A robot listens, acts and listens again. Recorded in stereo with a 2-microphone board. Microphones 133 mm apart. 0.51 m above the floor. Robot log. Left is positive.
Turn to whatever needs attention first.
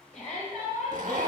note: The shout: about 60° left or 120° left.
cmd yaw +60
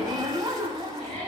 note: So it is at 50° left.
cmd yaw +50
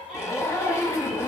end: Found it: a shout, straight ahead, 2 to 4 m away.